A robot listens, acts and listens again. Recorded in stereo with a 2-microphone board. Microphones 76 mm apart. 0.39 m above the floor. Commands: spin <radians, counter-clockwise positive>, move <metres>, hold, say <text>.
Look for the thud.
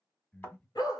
spin 0.52
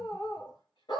hold
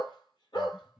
say I heard a thud, but can't make it out now. It was about straight ahead or 120° left.